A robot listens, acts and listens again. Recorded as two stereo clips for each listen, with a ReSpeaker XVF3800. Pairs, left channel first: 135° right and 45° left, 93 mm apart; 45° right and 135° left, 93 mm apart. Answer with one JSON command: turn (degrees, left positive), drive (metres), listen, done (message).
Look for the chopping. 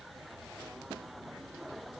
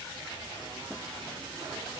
{"listen": true}
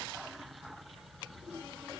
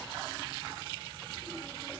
{"listen": true}
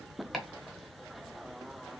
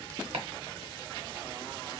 {"turn": 135}
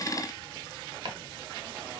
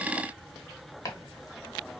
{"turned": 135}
{"turn": 10}
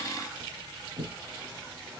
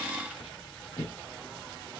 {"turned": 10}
{"done": "Found it: chopping, straight ahead."}